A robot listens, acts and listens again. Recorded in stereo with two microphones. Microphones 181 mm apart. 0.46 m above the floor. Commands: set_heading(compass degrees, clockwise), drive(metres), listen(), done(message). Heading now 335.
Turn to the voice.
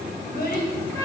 set_heading(270)
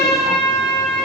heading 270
listen()
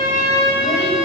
listen()
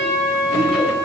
done("I heard a child speaking, but can't make it out now. It was about straight ahead or 50° left.")